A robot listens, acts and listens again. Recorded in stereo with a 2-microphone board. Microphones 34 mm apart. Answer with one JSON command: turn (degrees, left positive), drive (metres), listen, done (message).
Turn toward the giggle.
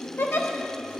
{"turn": 70}
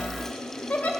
{"turn": 40}
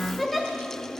{"done": "Found it: a giggle, straight ahead."}